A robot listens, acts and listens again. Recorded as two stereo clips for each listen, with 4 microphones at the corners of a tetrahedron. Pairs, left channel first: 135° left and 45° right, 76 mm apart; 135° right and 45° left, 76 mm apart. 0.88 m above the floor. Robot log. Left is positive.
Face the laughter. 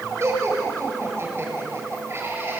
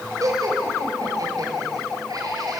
end: Facing the laughter.